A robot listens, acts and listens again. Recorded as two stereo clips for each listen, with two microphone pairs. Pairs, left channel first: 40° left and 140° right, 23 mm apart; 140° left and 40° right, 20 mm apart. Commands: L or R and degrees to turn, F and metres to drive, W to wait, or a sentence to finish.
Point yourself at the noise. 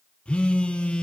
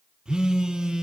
Facing the phone buzzing, under 1 m away.